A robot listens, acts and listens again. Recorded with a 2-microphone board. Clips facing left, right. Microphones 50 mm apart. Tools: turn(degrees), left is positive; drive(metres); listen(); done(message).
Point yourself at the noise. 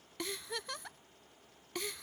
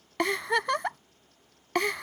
turn(degrees=-90)
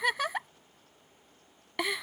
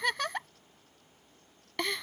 turn(degrees=10)
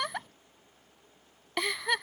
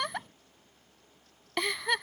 done("Facing the giggle.")